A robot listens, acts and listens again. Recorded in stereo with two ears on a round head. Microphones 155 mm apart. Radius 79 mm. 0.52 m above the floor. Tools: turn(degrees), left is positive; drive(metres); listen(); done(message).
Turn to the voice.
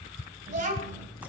turn(degrees=-50)
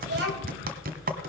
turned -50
turn(degrees=-75)
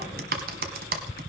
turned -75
listen()
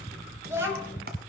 turn(degrees=-15)
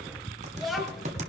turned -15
done("Facing the child speaking, 2 to 4 m away.")